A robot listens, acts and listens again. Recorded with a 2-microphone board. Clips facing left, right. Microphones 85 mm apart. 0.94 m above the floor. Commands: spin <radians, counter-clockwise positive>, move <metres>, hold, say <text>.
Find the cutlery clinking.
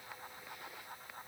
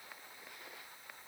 hold
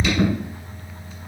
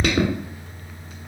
hold
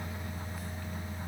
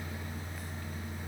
say I can't make out cutlery clinking to turn to.